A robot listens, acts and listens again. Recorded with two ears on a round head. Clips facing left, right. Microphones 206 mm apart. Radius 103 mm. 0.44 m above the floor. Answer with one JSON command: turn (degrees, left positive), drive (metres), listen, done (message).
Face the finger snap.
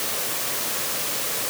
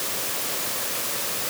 {"listen": true}
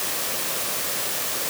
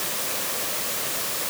{"listen": true}
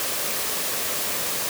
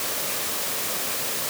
{"done": "I can't make out a finger snap to turn to."}